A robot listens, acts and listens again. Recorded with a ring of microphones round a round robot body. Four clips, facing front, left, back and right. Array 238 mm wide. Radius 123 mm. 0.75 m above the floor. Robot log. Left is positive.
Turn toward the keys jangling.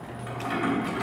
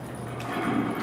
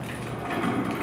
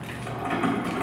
note: The keys jangling: 105° right.
cmd yaw -105
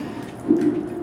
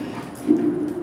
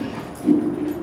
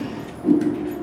cmd idle
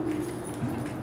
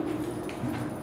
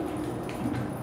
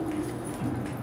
cmd idle
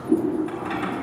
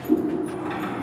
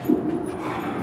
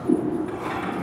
end: Facing the keys jangling.